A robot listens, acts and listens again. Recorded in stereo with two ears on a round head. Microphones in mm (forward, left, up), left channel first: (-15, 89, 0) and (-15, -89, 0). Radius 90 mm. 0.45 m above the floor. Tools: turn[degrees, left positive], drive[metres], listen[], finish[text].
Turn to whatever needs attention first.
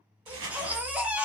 Action: turn[-30]
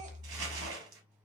Thought: So it is at 140° right.
Action: turn[-140]
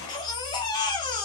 Thought: The baby crying is now 20° left.
Action: turn[20]
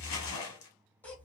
Action: finish[Facing the baby crying.]